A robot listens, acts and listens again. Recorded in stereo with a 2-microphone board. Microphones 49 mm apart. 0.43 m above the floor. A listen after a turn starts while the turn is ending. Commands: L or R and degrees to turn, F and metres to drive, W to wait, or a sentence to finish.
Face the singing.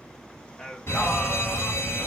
L30
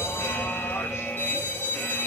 W
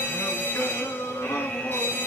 L105
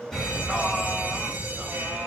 W
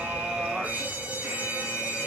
W
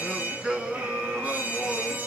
R15
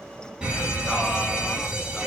W
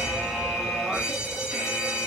W
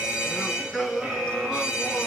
Facing the singing, 2 to 4 m away.